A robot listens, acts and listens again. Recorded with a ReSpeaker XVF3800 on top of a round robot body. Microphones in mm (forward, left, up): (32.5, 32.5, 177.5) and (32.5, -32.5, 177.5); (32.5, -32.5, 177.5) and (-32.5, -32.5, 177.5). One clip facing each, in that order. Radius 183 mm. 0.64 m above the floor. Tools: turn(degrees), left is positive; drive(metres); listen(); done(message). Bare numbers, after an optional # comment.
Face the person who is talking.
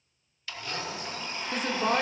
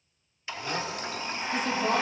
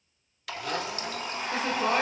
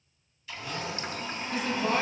# The woman speaking: 55° left.
turn(55)
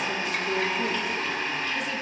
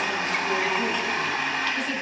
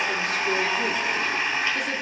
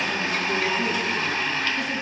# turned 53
listen()
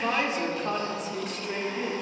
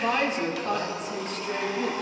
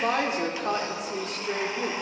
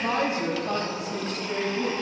done("Found it: a woman speaking, straight ahead, 2 to 4 m away.")